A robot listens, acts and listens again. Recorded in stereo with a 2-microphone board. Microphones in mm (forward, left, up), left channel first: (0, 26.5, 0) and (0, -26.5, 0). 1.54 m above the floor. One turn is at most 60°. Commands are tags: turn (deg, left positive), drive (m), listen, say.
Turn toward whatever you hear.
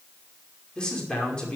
<turn deg="20"/>
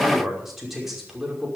<say>Found it: a man speaking, straight ahead.</say>